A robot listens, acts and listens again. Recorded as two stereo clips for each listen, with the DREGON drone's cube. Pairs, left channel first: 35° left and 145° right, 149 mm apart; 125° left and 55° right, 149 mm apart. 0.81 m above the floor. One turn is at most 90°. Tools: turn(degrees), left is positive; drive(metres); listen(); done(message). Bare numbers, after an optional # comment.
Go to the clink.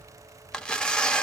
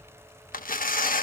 listen()
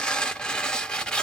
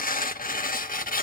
listen()
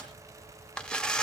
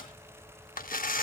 done("I can't make out a clink to turn to.")